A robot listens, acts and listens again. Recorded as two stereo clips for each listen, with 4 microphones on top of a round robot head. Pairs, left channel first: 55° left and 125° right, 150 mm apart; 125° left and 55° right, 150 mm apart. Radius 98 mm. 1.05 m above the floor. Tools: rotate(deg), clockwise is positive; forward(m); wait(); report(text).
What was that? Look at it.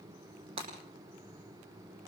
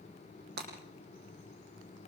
rotate(70)
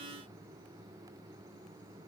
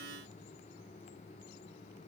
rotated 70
report("Facing where the breaking glass came from. I can't hear it now.")